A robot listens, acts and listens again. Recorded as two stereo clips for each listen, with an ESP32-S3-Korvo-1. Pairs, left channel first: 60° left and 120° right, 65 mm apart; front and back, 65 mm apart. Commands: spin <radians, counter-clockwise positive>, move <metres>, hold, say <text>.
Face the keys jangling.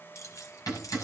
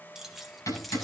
spin 1.57
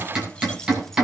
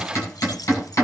hold
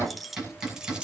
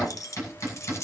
spin -0.79
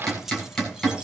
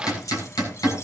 spin -0.61
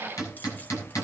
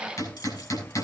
hold
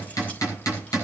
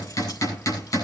hold
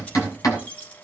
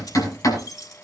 spin -0.17
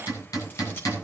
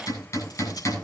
hold
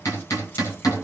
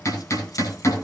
hold
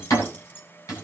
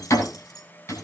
say Found it: keys jangling, straight ahead, 2 to 4 m away.